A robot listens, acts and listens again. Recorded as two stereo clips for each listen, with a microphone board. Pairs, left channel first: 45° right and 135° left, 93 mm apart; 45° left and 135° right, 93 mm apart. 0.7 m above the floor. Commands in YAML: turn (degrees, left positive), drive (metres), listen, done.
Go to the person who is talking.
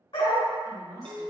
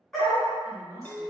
turn: -75
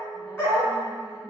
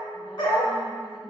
listen: true
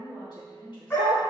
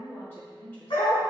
turn: -20
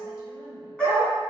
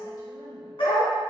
listen: true
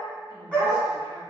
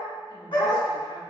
listen: true
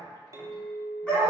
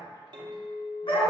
done: "Facing where the woman speaking came from. I can't hear it now. I did not reach it."